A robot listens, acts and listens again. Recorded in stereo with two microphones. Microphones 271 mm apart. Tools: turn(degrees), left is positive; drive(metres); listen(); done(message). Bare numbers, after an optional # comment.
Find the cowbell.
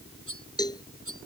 turn(30)
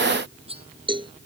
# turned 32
# So it is at 20° right.
turn(-20)
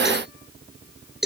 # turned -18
done("Found it: a cowbell, straight ahead.")